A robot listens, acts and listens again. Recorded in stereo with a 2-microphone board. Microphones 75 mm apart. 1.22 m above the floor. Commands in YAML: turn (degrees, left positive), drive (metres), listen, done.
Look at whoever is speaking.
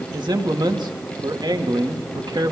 turn: -90
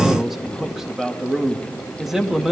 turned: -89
done: "Found it: a man speaking, straight ahead."